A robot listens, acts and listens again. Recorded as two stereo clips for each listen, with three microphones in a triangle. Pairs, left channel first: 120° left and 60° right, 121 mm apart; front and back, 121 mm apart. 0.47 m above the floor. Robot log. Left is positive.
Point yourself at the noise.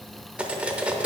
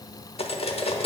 note: The cutlery clinking: 20° left.
cmd yaw +20
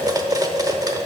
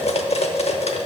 end: Found it: cutlery clinking, straight ahead.